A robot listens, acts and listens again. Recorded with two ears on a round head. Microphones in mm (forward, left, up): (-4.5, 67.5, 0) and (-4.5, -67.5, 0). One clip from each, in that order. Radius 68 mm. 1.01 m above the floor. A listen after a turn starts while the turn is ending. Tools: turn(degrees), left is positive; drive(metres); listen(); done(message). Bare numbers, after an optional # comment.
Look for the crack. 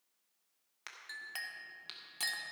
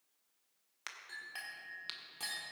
# The crack: about 15° right or 165° right.
turn(-15)
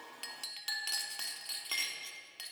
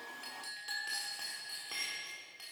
listen()
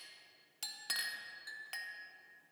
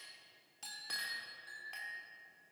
done("I heard a crack, but can't make it out now. It was about straight ahead or 150° right.")